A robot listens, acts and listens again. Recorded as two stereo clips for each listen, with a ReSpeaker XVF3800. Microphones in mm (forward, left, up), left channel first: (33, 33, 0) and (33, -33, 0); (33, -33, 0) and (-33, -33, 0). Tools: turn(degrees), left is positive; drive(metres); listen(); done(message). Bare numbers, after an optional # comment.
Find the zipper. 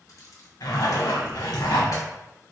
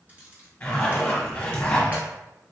# The zipper: 65° left.
turn(65)
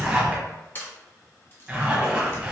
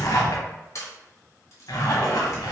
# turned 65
# The zipper is now 20° right.
turn(-20)
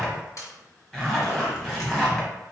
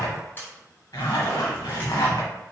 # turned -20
done("Facing the zipper.")